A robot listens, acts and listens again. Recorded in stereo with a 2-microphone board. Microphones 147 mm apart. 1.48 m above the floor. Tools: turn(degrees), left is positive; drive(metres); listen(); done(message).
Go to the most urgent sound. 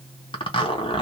listen()
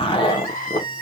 turn(degrees=75)
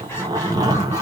listen()
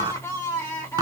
turn(degrees=20)
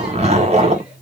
listen()
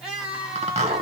drive(metres=1.0)
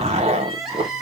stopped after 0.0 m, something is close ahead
done("Something is in my way. I am facing the crying but have not reached it.")